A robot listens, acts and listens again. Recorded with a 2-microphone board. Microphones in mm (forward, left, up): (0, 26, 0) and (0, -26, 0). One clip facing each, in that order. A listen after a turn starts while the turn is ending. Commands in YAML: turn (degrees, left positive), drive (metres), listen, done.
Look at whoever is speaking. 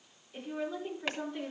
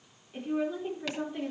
turn: -20
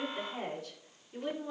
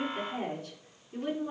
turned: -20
turn: -145
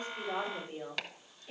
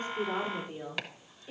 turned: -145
done: "Facing the woman speaking, over 4 m away."